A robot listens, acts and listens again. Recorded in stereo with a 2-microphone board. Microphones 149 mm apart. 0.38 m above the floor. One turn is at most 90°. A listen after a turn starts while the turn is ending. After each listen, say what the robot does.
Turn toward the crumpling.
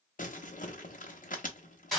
Turn 65° left.
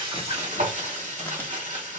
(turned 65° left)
Keep listening.
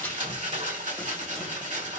Turn 15° left.
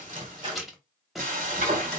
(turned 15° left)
Facing the crumpling, under 1 m away.